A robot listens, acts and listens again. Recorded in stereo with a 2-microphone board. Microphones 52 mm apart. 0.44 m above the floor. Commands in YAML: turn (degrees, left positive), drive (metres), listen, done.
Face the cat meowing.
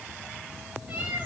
turn: -25
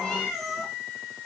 done: "Found it: a cat meowing, straight ahead, over 4 m away."